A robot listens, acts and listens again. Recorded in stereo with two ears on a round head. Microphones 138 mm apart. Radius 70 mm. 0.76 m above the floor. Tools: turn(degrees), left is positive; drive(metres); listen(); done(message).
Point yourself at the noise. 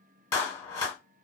turn(degrees=20)
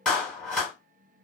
done("Facing the clap.")